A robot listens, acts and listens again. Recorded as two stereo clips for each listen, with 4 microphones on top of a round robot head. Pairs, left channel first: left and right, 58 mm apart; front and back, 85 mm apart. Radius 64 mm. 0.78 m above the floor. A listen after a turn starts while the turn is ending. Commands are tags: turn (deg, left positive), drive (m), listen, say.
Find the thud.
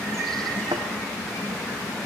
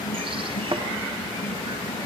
<turn deg="-130"/>
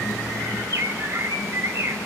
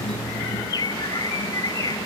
<say>Facing where the thud came from. I can't hear it now.</say>